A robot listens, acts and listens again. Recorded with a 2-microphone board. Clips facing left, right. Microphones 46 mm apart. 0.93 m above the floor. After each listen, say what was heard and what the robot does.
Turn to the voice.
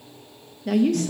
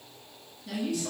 The woman speaking: about 50° left or 130° left. Turn 50° left.
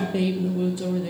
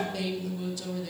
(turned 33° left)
So it is at 25° left. Turn 25° left.
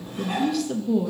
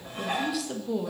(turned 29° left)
Facing the woman speaking.